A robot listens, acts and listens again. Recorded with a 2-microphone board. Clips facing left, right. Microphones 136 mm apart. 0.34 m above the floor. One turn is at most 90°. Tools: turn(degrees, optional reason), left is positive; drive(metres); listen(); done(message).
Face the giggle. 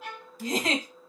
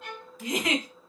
turn(degrees=30, reason="The giggle: about 30° left or 150° left.")
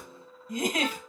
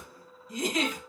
turn(degrees=90, reason="So it is at 115° left.")
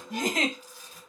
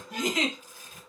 turn(degrees=55, reason="The giggle is now 55° left.")
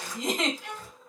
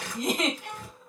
done("Facing the giggle.")